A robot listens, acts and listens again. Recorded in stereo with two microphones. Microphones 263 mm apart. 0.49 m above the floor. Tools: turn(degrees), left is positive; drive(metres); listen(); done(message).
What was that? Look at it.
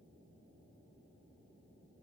listen()
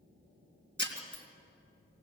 turn(degrees=-45)
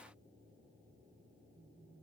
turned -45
listen()
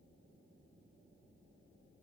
done("I heard breaking glass, but can't make it out now. It was about straight ahead or 90° right.")